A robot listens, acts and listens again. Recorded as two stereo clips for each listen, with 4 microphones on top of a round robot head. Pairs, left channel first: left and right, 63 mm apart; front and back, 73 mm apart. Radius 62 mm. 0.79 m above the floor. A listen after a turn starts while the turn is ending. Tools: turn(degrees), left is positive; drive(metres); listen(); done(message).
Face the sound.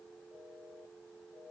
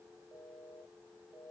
listen()
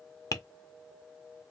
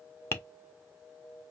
turn(degrees=55)
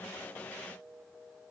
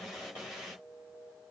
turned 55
listen()
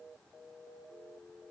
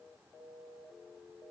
listen()
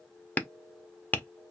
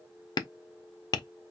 turn(degrees=25)
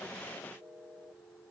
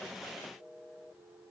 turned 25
listen()
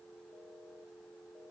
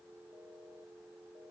listen()
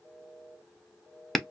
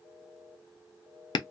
done("Found it: tapping, straight ahead, under 1 m away.")